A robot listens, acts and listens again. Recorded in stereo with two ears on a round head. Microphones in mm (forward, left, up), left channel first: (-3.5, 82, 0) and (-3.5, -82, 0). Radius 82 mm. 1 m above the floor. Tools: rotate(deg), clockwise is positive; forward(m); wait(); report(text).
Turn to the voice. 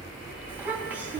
rotate(30)
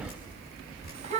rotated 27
rotate(145)
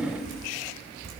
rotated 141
report("Found it: a child speaking, straight ahead.")